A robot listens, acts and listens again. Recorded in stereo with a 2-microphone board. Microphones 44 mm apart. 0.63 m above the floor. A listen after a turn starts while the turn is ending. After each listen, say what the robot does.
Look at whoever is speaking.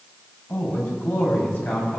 Turn 50° left.
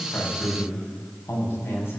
Turn 75° left.
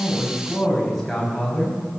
Facing the man speaking.